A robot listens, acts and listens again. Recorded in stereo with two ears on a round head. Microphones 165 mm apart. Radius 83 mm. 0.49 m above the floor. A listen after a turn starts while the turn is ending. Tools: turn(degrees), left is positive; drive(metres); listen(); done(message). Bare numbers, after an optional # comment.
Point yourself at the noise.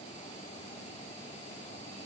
listen()
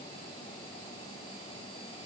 listen()
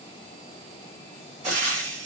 # The frying: about 40° right or 140° right.
turn(-40)
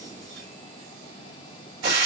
# So it is at 90° right.
turn(-90)
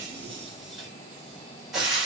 done("Found it: frying, straight ahead.")